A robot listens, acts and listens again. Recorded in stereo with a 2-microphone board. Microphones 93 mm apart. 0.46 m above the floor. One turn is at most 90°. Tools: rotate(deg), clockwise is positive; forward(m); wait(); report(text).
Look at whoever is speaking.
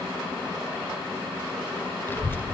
rotate(-20)
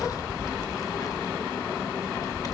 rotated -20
rotate(-90)
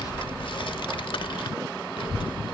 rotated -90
rotate(-75)
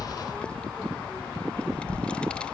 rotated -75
rotate(-15)
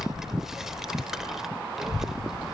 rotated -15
report("Facing the child speaking, under 1 m away.")